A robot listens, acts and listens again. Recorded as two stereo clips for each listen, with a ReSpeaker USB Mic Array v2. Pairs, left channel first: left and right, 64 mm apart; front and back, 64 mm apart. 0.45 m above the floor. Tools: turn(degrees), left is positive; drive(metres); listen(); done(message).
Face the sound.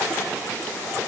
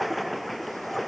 listen()
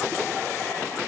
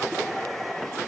listen()
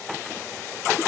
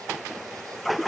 done("I can't make out anything.")